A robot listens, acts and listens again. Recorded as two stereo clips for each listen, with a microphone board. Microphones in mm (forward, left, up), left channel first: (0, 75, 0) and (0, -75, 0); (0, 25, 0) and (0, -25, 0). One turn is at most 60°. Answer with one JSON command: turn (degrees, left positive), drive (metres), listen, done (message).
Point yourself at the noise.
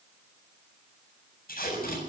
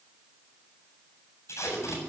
{"turn": 60}
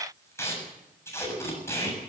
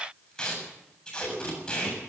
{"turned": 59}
{"turn": 15}
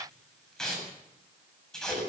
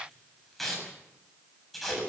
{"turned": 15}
{"done": "Found it: tape being pulled, straight ahead, over 4 m away."}